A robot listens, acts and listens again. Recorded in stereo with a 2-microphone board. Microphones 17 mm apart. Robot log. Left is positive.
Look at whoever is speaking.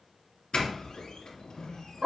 cmd idle
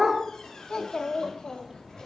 note: The child speaking: about 60° left or 120° left.
cmd yaw +60
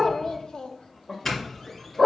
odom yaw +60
note: So it is at 60° left.
cmd yaw +60
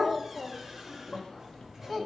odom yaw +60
note: The child speaking is now 10° left.
cmd yaw +10
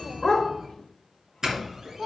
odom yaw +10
end: Found it: a child speaking, straight ahead, 1 to 2 m away.